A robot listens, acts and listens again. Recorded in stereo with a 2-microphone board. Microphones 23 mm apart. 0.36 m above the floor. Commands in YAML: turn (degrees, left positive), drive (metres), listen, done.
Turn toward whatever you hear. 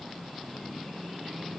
listen: true
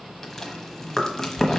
turn: 30
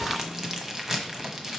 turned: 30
turn: -20
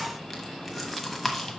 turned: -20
done: "Facing the chewing."